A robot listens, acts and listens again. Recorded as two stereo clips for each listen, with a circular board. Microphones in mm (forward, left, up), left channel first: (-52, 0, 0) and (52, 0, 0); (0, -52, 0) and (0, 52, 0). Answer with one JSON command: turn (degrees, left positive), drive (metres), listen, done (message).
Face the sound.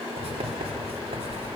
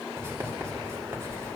{"turn": 25}
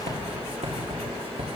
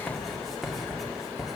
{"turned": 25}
{"done": "Found it: writing, straight ahead, 2 to 4 m away."}